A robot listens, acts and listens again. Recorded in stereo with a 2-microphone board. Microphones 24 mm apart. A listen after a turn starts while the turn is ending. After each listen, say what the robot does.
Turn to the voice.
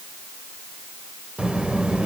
Turn 50° right.
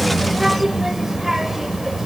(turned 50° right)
Facing the child speaking.